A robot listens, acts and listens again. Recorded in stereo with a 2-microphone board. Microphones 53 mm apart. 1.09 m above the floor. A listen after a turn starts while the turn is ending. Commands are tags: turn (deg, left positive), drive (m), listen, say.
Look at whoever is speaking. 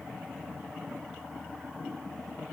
<listen/>
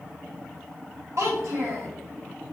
<turn deg="-65"/>
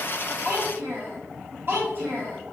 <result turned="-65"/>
<turn deg="-45"/>
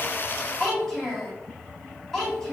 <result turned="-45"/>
<turn deg="10"/>
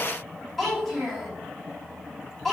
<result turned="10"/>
<say>Facing the child speaking, 1 to 2 m away.</say>